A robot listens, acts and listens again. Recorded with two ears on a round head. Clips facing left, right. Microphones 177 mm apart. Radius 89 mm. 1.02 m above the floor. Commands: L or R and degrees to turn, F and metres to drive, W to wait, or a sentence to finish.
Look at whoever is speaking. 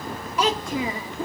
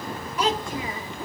L60
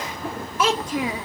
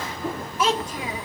L55
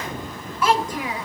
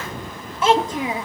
R20
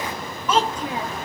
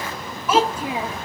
Facing the child speaking, under 1 m away.